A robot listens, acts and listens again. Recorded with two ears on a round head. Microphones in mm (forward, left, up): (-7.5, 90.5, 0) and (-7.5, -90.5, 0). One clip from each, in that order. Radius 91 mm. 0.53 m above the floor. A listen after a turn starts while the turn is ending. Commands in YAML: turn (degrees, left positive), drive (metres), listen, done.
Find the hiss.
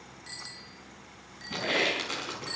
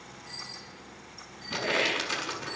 turn: 75
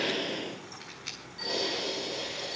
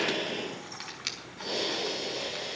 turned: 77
done: "Found it: a hiss, straight ahead, over 4 m away."